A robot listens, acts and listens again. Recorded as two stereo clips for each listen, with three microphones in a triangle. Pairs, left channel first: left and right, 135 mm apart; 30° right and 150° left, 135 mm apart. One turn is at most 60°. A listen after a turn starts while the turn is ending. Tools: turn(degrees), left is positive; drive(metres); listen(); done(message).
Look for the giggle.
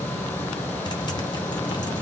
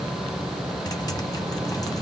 listen()
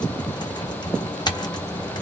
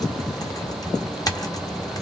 listen()
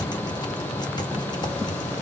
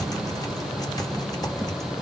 done("I can't make out a giggle to turn to.")